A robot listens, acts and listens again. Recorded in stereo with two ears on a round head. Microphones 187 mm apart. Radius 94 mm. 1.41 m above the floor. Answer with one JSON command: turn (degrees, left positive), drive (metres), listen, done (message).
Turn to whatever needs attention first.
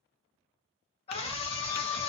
{"turn": 30}
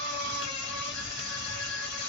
{"turn": 125}
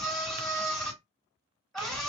{"done": "Found it: a scream, straight ahead."}